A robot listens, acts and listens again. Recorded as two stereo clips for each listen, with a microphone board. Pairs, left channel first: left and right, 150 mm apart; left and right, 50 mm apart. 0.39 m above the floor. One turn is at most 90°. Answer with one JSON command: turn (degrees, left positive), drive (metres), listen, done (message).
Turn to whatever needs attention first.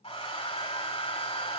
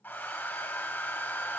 {"listen": true}
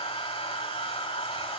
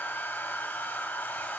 {"listen": true}
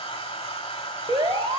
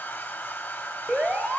{"turn": -30}
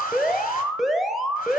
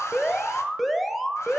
{"done": "Found it: an alarm, straight ahead."}